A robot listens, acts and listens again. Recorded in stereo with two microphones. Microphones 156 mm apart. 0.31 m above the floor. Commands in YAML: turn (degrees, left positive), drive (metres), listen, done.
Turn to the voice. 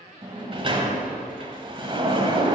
listen: true
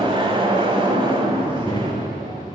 turn: 30
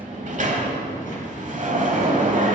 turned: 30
turn: 115
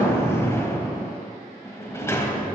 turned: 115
listen: true
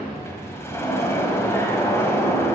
turn: -10
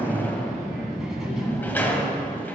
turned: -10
done: "Found it: a child speaking, straight ahead."